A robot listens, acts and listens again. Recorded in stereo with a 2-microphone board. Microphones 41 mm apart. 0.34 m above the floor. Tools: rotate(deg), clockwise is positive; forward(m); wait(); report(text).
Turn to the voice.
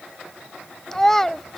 rotate(-30)
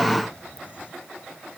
wait()
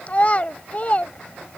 rotate(-140)
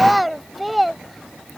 report("Found it: a child speaking, straight ahead.")